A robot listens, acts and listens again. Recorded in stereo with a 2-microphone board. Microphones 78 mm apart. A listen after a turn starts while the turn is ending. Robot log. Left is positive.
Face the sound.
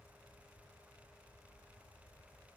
cmd idle
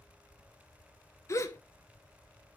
note: The gasp: about 45° left or 135° left.
cmd yaw +45
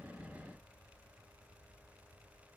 cmd idle
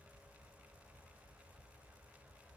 end: I heard a gasp, but can't make it out now. It was about straight ahead or 90° left.